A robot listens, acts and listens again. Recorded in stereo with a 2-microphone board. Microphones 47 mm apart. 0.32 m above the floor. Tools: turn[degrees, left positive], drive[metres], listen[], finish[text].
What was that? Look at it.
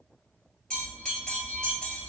Thought: The bell: about 20° left or 160° left.
Action: turn[20]
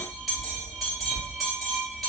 Action: finish[Found it: a bell, straight ahead, 1 to 2 m away.]